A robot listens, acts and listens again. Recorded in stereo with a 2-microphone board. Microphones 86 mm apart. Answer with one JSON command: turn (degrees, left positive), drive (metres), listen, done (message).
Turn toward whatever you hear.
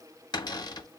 {"turn": 55}
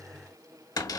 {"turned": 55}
{"turn": 55}
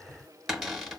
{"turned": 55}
{"done": "Found it: a cupboard door, straight ahead, under 1 m away."}